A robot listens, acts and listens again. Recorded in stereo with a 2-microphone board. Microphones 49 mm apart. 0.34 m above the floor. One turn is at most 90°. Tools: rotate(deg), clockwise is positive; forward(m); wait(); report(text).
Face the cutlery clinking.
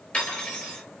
rotate(-30)
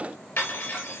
rotate(-90)
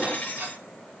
rotate(-25)
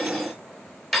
report("Found it: cutlery clinking, straight ahead, 2 to 4 m away.")